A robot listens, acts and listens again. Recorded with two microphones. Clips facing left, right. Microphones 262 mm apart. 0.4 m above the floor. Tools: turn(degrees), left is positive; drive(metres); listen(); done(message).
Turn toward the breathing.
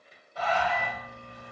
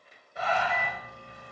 turn(degrees=-20)
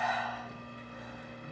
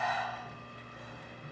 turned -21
done("Found it: breathing, straight ahead, 1 to 2 m away.")